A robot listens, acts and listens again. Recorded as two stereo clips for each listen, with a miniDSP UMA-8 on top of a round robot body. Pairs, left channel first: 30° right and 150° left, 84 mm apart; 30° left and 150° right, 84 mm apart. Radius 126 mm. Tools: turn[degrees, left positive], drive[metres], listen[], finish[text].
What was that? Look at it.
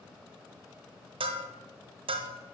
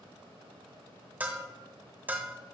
Thought: The bell: 140° left.
Action: turn[140]
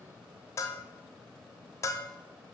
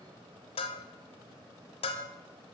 Thought: The bell is now 25° left.
Action: turn[25]
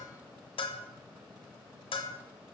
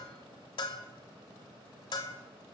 Action: finish[Found it: a bell, straight ahead.]